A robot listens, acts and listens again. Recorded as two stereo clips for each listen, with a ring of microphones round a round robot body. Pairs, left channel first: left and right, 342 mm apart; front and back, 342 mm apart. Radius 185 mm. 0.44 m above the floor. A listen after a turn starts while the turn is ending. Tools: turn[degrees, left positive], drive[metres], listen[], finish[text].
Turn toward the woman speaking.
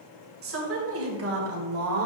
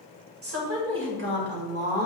Thought: The woman speaking: 125° right.
Action: turn[-125]
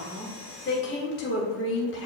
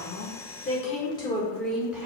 Thought: The woman speaking is now 100° left.
Action: turn[100]
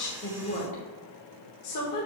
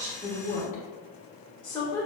Thought: The woman speaking is now 75° left.
Action: turn[75]
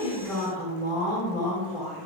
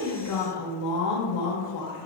Action: finish[Found it: a woman speaking, straight ahead.]